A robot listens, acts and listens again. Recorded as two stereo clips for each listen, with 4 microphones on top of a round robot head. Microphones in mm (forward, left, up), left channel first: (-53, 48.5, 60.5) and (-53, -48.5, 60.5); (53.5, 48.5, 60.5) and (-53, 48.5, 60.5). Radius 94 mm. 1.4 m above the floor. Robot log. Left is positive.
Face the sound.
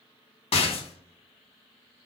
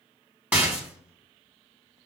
note: The rattle: 105° left.
cmd yaw +105
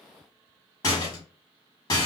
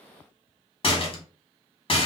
note: The rattle is now 35° left.
cmd yaw +35
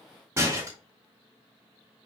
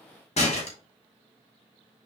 note: The rattle is now 20° right.
cmd yaw -20
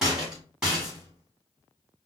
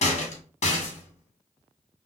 end: Found it: a rattle, straight ahead.